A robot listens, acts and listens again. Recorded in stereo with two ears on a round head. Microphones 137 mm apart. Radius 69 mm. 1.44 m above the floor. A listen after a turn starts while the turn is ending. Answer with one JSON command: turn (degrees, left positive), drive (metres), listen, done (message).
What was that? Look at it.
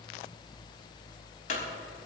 {"turn": 60}
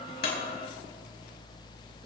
{"listen": true}
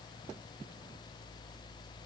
{"done": "I heard a clunk, but can't make it out now. It was about straight ahead or 60° left."}